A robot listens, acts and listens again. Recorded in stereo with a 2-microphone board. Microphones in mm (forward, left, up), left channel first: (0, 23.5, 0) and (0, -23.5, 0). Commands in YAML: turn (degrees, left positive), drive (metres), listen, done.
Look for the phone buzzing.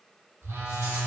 turn: -90
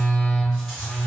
turn: 10
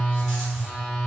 done: "Found it: a phone buzzing, straight ahead."